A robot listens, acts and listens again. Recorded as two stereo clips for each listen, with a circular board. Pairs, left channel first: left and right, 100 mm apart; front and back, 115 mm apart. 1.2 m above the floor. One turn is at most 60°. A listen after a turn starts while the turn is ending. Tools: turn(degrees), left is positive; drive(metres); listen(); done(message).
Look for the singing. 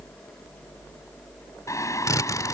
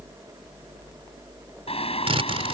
turn(degrees=30)
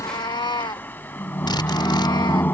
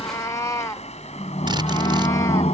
turn(degrees=20)
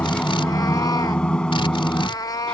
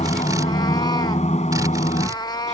turn(degrees=10)
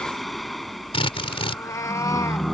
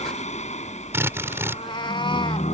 done("Facing the singing.")